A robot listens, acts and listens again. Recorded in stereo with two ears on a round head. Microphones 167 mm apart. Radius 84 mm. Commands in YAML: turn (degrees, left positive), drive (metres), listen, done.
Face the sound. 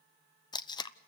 turn: 25
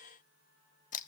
turn: 130
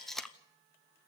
done: "Facing the tape being pulled, under 1 m away."